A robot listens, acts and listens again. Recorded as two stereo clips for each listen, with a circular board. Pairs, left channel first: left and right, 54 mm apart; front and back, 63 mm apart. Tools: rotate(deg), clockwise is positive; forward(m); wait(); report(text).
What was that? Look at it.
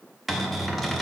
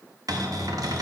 rotate(-180)
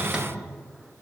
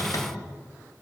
rotate(20)
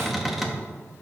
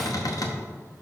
report("Found it: a cupboard door, straight ahead.")